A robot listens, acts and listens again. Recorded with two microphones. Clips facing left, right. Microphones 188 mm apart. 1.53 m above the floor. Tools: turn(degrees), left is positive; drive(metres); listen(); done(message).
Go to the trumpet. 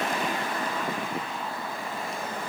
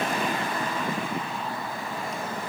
listen()
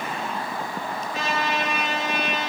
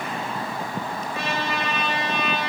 turn(degrees=90)
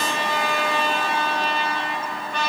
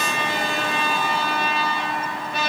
drive(metres=1.0)
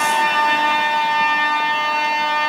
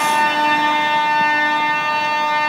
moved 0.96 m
drive(metres=1.0)
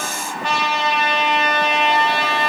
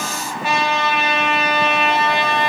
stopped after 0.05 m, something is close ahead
done("I am next to the trumpet.")